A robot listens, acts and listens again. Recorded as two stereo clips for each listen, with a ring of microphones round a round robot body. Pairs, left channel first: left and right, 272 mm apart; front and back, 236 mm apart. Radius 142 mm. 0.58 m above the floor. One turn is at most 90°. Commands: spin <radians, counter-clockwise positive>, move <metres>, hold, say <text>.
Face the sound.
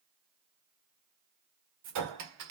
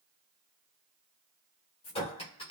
spin -1.22
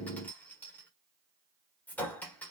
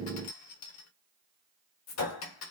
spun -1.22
say Facing the clink.